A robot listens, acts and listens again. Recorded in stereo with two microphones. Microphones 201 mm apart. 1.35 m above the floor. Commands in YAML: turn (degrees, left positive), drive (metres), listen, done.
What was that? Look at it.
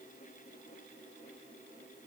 listen: true
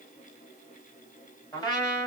turn: 20
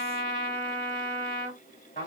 turn: 140
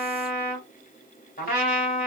turn: 45
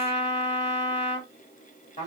turn: 35
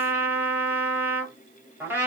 turn: -10
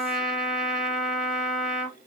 done: "Found it: a trumpet, straight ahead, 2 to 4 m away."